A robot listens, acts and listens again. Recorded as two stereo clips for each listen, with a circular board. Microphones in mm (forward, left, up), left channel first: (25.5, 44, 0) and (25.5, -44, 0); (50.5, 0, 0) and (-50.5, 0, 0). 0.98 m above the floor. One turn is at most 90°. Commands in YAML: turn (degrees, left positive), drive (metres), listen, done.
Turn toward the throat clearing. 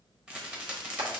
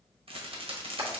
listen: true
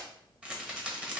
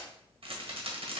listen: true
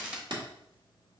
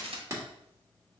done: "I can't make out throat clearing to turn to."